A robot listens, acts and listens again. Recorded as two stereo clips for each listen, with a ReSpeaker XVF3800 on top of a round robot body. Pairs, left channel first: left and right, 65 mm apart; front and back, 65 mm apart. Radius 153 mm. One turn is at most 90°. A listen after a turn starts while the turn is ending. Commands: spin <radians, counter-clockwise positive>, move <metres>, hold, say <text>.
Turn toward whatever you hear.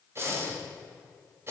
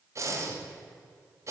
spin -1.57
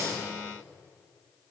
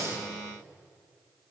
spin -0.87
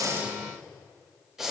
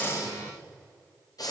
say Facing the breathing.